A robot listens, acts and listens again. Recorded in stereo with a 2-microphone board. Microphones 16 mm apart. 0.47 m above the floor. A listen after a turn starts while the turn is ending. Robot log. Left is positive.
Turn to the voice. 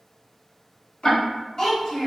note: The child speaking: about 40° left or 140° left.
cmd yaw +40
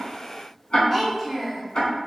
end: Found it: a child speaking, straight ahead, 1 to 2 m away.